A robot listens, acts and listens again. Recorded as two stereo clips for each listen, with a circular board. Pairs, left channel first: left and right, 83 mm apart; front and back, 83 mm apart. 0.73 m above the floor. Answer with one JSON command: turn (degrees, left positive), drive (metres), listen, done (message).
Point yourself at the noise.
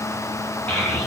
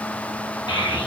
{"turn": 20}
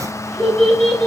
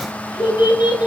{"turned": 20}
{"turn": 10}
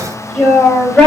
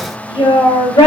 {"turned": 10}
{"turn": 15}
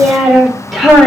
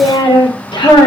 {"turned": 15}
{"done": "Facing the child speaking, 1 to 2 m away."}